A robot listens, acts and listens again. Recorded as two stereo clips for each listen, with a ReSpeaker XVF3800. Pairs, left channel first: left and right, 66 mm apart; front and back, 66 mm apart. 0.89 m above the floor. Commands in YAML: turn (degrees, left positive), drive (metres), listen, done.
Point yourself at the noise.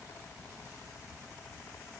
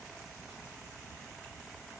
listen: true
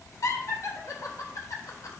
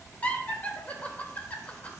turn: 65
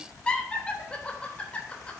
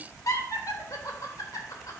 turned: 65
turn: 20
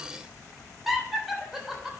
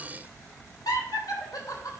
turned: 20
done: "Found it: laughter, straight ahead, 2 to 4 m away."